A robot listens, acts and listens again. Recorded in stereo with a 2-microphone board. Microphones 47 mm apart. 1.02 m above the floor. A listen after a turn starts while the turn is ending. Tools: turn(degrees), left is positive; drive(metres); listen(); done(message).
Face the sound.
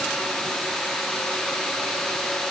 listen()
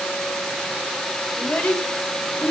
turn(degrees=25)
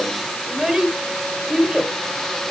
turn(degrees=-15)
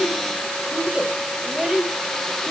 done("Found it: a child speaking, straight ahead, 2 to 4 m away.")